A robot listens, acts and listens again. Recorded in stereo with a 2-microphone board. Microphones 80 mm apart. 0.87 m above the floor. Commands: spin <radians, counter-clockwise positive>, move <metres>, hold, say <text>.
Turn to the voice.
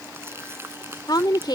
spin 1.05
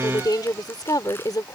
spin 1.05
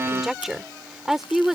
say Found it: a woman speaking, straight ahead.